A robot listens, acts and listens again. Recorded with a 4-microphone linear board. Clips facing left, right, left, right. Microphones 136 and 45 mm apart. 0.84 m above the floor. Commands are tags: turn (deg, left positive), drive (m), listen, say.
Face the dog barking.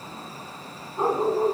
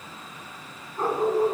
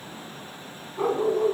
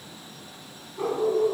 <turn deg="20"/>
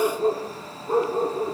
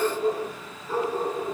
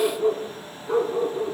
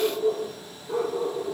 <turn deg="135"/>
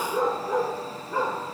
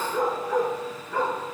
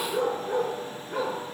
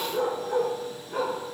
<turn deg="20"/>
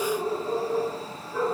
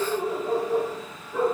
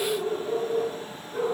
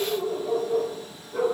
<say>Facing the dog barking.</say>